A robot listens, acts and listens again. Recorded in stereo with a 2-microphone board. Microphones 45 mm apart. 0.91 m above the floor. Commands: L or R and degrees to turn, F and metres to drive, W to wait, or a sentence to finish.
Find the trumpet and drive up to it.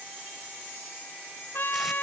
L50
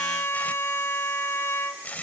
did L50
L80
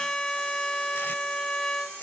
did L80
L10
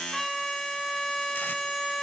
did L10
F1.0
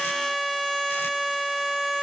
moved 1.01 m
F1.0
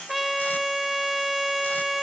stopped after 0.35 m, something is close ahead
I am next to the trumpet.